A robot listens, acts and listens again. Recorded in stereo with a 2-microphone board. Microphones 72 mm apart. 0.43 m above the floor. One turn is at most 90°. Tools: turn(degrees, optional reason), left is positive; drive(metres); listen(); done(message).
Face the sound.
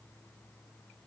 listen()
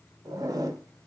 turn(degrees=-55, reason="The zipper: about 55° right or 125° right.")
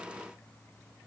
listen()
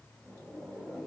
done("Facing the zipper, under 1 m away.")